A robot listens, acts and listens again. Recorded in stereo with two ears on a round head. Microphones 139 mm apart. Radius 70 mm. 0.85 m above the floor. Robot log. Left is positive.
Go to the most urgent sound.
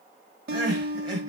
note: The crying: about 30° right or 150° right.
cmd yaw -30
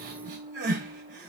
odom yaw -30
note: So it is at 125° right.
cmd yaw -125
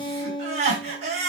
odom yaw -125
note: The crying is now 45° right.
cmd yaw -45
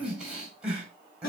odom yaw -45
cmd fwd 1.0
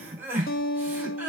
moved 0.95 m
note: The crying is now 10° right.
cmd yaw -10
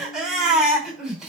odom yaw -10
cmd fwd 1.0
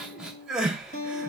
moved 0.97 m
cmd fwd 1.0
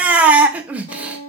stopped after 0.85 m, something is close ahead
note: The crying is now 10° right.
cmd yaw -10
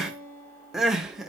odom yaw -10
end: I am next to the crying.